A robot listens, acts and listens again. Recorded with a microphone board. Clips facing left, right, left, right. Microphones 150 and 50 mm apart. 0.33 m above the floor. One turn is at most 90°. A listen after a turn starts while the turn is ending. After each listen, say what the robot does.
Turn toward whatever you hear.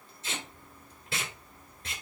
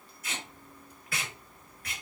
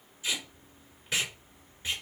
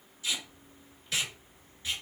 Turn 25° left.
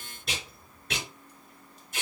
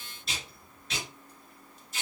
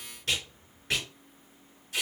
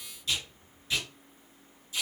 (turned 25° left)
Turn 90° left.
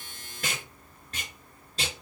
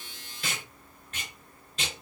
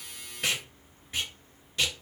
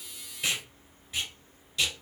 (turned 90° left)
Turn 35° left.
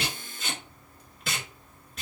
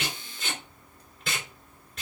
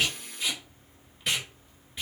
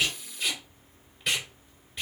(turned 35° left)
Found it: tape being pulled, straight ahead.